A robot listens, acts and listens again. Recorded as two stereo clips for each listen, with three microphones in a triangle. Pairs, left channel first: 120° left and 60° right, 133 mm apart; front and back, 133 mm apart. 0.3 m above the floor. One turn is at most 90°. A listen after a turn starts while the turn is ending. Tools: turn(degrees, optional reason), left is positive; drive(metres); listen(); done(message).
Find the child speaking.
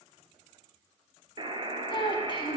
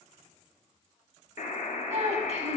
turn(degrees=90, reason="The child speaking: 165° left.")
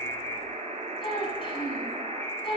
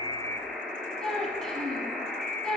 turn(degrees=85, reason="The child speaking is now 85° left.")
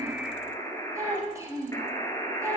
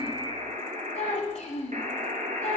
done("Facing the child speaking.")